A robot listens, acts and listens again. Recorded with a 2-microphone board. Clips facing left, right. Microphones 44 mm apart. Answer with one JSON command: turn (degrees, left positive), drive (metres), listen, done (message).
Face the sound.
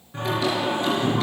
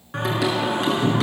{"turn": -90}
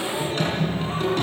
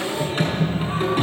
{"turn": -20}
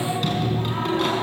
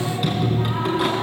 {"turn": -10}
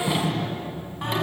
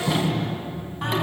{"done": "Found it: singing, straight ahead, over 4 m away."}